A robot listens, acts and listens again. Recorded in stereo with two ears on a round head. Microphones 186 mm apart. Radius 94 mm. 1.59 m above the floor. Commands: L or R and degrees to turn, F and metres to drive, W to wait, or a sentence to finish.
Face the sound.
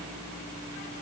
W
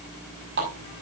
R55
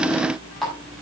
Found it: a running tap, straight ahead.